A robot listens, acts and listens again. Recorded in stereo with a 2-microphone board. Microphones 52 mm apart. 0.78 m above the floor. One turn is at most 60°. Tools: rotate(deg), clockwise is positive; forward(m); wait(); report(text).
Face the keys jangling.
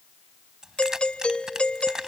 rotate(30)
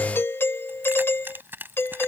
rotate(60)
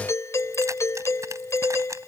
rotate(60)
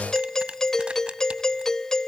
rotate(20)
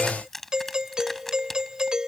report("Found it: keys jangling, straight ahead.")